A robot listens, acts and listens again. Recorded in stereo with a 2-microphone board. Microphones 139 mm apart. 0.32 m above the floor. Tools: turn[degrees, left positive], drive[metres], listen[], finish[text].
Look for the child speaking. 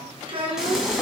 Thought: The child speaking: about 40° right or 140° right.
Action: turn[-40]
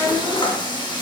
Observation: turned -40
Thought: So it is at 10° right.
Action: turn[-10]
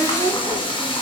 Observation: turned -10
Thought: The child speaking is now 15° right.
Action: turn[-15]
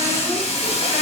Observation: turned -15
Action: listen[]
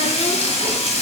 Action: listen[]
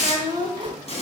Thought: The child speaking is now 35° right.
Action: turn[-35]
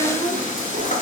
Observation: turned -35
Thought: The child speaking is now 10° right.
Action: turn[-10]
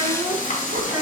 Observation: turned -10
Action: finish[Found it: a child speaking, straight ahead, 2 to 4 m away.]